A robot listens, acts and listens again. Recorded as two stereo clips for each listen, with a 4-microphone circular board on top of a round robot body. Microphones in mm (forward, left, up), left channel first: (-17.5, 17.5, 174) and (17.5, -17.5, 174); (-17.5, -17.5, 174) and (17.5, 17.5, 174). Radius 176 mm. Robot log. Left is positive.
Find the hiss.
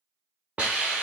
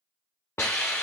note: The hiss: 110° right.
cmd yaw -110
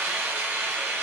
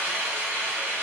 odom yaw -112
end: Facing the hiss, 1 to 2 m away.